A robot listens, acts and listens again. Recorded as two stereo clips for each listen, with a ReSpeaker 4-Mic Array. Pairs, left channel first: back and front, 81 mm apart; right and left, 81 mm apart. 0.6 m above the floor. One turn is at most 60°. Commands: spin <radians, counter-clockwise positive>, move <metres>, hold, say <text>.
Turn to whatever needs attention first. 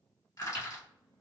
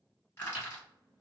hold
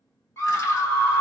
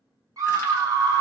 spin 1.05
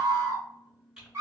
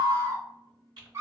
spin 0.87
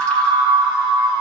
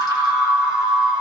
spin 0.26
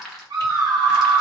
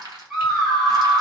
say Facing the scream.